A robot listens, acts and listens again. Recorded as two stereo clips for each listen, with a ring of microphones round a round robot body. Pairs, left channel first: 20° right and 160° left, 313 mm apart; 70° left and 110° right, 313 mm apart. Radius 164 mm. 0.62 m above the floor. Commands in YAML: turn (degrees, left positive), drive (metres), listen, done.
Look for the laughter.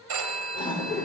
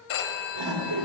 turn: -105
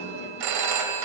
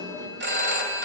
turn: -45
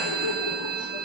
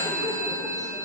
listen: true
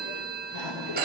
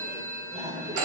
turn: -45
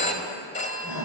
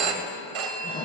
turn: -10
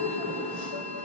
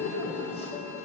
done: "Found it: laughter, straight ahead."